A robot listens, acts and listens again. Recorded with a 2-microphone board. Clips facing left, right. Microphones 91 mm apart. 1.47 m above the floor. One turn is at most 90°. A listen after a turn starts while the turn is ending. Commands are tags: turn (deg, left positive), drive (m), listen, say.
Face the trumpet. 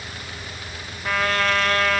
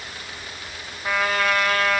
<turn deg="-30"/>
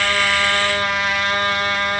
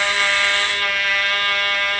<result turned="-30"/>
<turn deg="25"/>
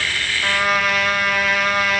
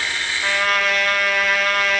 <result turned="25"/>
<say>Facing the trumpet, 1 to 2 m away.</say>